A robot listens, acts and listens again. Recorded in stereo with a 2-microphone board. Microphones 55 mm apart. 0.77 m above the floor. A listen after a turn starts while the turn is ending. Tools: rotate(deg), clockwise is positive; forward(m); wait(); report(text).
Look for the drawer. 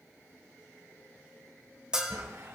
rotate(90)
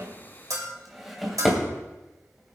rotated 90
report("Facing the drawer, 2 to 4 m away.")